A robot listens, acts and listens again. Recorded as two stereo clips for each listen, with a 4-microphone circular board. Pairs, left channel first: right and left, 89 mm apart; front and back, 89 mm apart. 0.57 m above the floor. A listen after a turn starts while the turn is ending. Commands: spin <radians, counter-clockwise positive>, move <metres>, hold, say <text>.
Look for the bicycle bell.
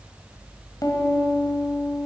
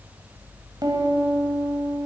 hold
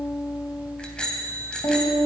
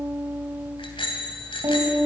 spin -0.17
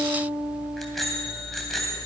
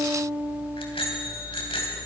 say Facing the bicycle bell.